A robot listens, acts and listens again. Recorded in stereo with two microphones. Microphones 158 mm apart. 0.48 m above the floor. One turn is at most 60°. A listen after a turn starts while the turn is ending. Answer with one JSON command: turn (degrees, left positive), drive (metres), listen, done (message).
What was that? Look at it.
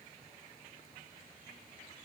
{"listen": true}
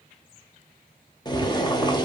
{"turn": 25}
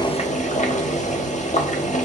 {"turn": 60}
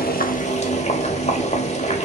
{"turn": 50}
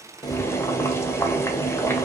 {"turn": 20}
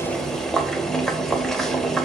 {"done": "Facing the boiling."}